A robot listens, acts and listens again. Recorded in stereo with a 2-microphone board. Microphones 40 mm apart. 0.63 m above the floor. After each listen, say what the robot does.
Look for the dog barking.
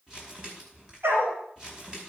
Turn 90° right.
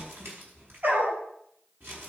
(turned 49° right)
Turn 50° right.
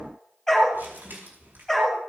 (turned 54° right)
Facing the dog barking, over 4 m away.